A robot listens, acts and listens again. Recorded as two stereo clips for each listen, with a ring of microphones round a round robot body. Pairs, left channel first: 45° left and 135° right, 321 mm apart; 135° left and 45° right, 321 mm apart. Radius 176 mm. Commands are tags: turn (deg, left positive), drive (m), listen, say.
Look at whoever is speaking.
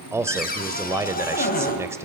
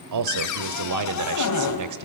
<turn deg="-55"/>
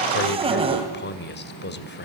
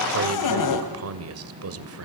<turn deg="-10"/>
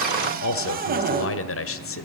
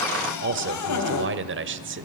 <say>Facing the man speaking.</say>